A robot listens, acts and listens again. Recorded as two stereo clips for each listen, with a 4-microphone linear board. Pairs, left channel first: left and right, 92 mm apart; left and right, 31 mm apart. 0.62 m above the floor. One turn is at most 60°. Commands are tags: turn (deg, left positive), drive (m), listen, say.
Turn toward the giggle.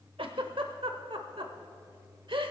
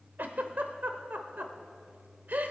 <turn deg="-60"/>
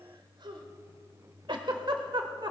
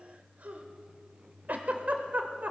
<turn deg="-55"/>
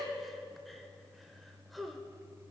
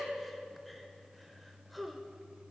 <say>Found it: a giggle, straight ahead.</say>